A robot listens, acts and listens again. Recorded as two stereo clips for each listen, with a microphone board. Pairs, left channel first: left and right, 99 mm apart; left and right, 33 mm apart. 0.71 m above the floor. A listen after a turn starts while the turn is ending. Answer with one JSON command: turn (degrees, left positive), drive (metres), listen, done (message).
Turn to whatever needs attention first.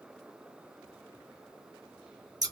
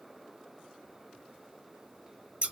{"listen": true}
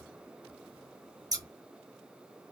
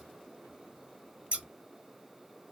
{"listen": true}
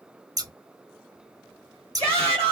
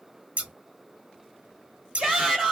{"turn": -30}
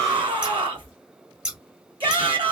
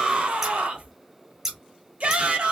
{"turn": -120}
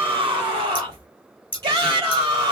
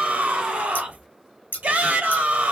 {"turn": -45}
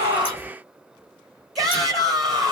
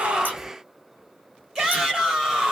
{"done": "Found it: a shout, straight ahead."}